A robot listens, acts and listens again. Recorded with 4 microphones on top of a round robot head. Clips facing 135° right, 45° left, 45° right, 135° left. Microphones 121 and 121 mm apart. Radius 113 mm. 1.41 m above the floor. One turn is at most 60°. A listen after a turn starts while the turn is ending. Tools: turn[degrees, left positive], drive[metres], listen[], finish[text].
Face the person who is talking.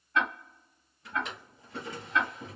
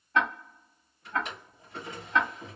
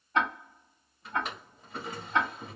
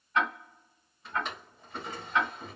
Action: listen[]
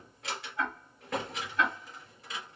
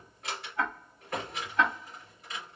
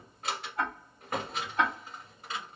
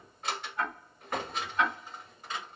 Action: listen[]
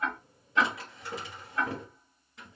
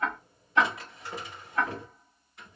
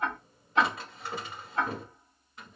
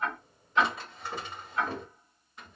Action: finish[I can't make out anyone speaking to turn to.]